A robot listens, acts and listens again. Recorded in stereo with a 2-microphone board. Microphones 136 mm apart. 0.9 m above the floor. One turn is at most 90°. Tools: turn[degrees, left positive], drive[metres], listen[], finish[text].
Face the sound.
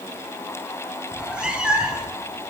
Action: turn[-30]
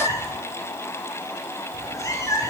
Thought: So it is at 25° left.
Action: turn[25]
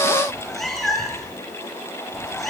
Action: finish[Found it: a cat meowing, straight ahead.]